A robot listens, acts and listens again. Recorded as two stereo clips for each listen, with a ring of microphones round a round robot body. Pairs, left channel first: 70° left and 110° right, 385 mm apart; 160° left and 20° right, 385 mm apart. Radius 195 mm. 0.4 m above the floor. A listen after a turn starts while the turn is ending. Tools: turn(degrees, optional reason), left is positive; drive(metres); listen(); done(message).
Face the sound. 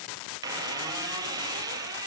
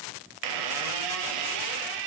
turn(degrees=-30, reason="The squeak: 30° right.")
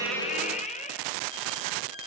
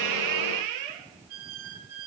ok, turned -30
done("Found it: a squeak, straight ahead.")